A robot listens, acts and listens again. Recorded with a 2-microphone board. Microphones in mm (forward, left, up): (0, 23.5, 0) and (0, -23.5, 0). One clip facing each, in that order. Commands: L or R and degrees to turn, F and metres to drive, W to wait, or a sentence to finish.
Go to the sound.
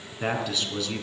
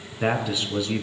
R30
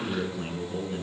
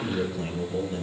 L20
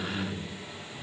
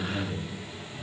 F1.0
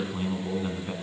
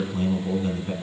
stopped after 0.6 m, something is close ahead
L10
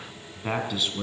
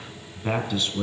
Something is in my way. I am facing the man speaking but have not reached it.